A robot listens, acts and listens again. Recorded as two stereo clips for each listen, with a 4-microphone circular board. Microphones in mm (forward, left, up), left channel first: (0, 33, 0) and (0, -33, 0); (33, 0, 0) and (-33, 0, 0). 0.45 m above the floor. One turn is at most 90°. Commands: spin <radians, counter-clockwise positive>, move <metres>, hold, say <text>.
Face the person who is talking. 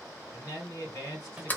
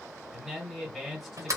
spin 1.57
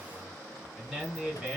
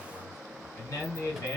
spin -0.26
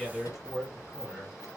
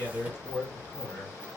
say Found it: a man speaking, straight ahead, 2 to 4 m away.